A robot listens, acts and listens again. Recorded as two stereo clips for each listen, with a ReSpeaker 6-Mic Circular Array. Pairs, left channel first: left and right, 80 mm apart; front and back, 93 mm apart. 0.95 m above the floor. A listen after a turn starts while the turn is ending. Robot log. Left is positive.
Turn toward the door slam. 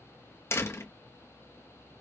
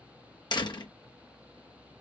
note: The door slam: 35° left.
cmd yaw +35
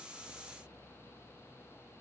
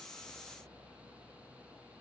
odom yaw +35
end: I heard a door slam from this way, but can't make it out now.